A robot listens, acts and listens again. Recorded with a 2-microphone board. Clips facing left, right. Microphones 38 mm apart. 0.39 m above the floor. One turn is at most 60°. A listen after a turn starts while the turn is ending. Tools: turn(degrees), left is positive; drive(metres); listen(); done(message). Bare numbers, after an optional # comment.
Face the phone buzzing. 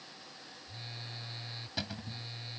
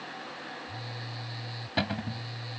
turn(30)
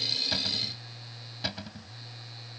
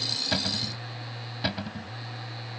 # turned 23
# So it is at 15° right.
turn(-15)
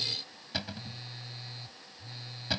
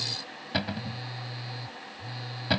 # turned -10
# The phone buzzing is now 10° right.
turn(-10)
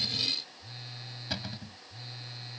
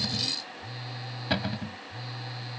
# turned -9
done("Facing the phone buzzing.")